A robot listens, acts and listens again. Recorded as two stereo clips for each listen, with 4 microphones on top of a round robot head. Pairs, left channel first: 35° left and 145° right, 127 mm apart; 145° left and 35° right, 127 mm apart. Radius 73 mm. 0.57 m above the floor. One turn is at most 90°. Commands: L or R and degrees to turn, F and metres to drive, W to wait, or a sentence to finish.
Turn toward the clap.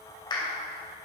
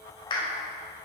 L90
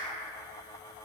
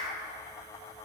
W
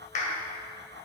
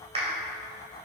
L10
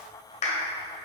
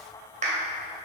Facing the clap, 2 to 4 m away.